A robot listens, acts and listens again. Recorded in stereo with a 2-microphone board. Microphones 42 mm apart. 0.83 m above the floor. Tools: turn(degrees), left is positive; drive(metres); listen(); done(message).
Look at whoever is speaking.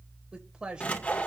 turn(degrees=-20)
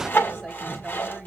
listen()
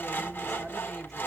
listen()
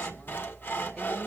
done("I heard a woman speaking, but can't make it out now. It was about straight ahead or 140° right.")